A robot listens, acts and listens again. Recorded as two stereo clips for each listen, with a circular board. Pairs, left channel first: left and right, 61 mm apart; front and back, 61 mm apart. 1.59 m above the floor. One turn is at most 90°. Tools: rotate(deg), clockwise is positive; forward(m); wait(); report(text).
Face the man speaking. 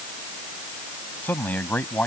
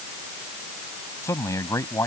rotate(-30)
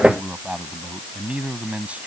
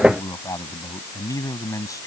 rotate(20)
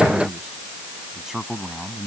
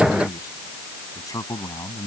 report("Found it: a man speaking, straight ahead.")